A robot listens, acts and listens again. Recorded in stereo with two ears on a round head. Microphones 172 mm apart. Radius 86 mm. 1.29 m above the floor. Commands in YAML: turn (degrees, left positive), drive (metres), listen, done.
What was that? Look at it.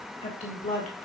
turn: 40
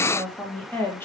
turn: 15
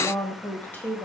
turn: 15
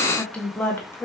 turn: 15
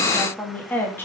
turn: 15
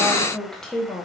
turn: 10
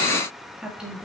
done: "Facing the woman speaking, 2 to 4 m away."